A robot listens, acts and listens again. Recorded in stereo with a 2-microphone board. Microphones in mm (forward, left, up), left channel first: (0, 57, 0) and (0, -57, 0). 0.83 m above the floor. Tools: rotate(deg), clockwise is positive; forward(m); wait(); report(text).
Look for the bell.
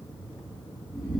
wait()
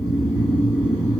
wait()
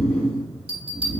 rotate(55)
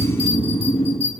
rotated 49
rotate(75)
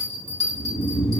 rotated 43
rotate(35)
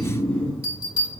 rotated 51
rotate(-15)
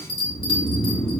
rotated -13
report("Found it: a bell, straight ahead, 1 to 2 m away.")